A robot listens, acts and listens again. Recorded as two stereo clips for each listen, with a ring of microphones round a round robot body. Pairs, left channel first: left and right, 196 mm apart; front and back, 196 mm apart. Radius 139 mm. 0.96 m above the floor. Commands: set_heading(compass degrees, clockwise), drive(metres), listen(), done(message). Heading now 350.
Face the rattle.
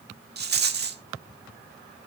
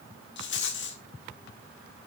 set_heading(45)
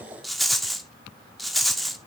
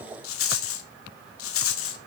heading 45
done("Found it: a rattle, straight ahead, 1 to 2 m away.")